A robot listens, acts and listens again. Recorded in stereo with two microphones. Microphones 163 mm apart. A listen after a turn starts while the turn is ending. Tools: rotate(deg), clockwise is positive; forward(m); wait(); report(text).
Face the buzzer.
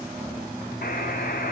rotate(-65)
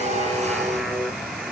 report("Found it: a buzzer, straight ahead, 1 to 2 m away.")